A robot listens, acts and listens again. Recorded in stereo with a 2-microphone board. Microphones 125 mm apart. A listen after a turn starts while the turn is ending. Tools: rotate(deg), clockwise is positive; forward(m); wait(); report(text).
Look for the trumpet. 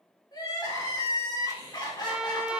rotate(30)
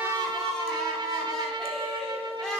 rotate(140)
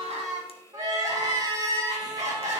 rotate(30)
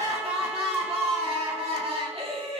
wait()
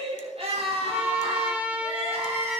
rotate(10)
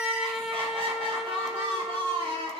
report("Found it: a trumpet, straight ahead.")